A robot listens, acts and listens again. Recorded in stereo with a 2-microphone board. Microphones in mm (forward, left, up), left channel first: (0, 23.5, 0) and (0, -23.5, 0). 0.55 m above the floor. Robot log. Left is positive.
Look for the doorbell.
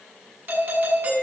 note: The doorbell: about 45° right or 135° right.
cmd yaw -45
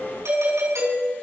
note: So it is at 90° right.
cmd yaw -90
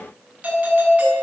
note: The doorbell is now 30° right.
cmd yaw -30
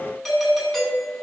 end: Facing the doorbell.